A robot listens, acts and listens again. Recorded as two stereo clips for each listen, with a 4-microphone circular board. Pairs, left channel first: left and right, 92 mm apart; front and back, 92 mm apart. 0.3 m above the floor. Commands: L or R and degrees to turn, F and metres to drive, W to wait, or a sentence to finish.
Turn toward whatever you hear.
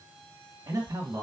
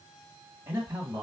R125
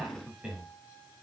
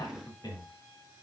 R10
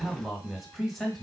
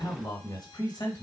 Found it: a man speaking, straight ahead, 1 to 2 m away.